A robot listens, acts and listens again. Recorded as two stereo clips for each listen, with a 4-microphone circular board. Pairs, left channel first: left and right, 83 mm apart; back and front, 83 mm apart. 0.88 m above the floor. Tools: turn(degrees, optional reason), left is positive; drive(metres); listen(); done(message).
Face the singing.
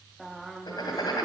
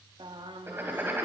done("Found it: singing, straight ahead, under 1 m away.")